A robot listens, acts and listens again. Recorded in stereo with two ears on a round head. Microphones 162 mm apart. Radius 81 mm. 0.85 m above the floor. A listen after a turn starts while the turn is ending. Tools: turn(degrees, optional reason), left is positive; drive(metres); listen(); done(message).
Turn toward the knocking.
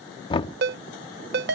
turn(degrees=25, reason="The knocking: about 25° left or 155° left.")
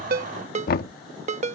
turn(degrees=125, reason="So it is at 125° left.")
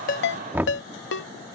turn(degrees=-10, reason="The knocking is now 10° right.")
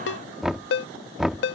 done("Facing the knocking.")